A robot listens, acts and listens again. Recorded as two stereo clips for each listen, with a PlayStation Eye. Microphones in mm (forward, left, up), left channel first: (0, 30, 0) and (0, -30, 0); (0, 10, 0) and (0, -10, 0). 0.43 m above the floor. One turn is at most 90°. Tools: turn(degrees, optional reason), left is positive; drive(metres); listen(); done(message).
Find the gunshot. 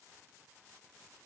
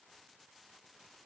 listen()
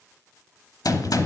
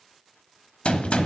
turn(degrees=90)
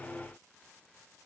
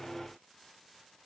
done("Facing where the gunshot came from. I can't hear it now.")